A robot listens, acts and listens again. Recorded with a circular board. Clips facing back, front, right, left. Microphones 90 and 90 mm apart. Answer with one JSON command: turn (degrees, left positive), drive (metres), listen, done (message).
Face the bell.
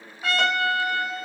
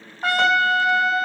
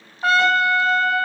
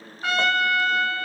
{"listen": true}
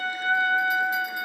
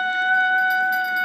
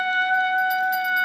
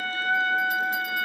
{"listen": true}
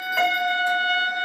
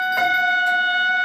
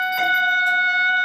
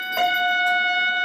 {"done": "I can't make out a bell to turn to."}